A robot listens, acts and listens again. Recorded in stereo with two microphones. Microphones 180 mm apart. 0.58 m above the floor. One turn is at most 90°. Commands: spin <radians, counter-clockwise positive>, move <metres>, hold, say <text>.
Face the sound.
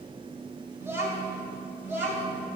spin -0.52
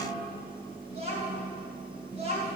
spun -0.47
spin -1.57
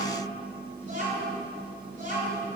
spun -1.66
spin -0.87
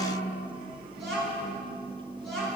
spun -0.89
say Found it: a child speaking, straight ahead.